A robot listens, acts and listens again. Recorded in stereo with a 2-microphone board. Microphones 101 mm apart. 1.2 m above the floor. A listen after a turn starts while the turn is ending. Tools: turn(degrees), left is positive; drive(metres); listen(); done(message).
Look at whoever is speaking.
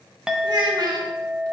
turn(degrees=-50)
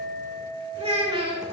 turn(degrees=-80)
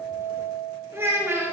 turn(degrees=-25)
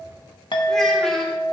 listen()
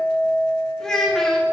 done("Facing the child speaking.")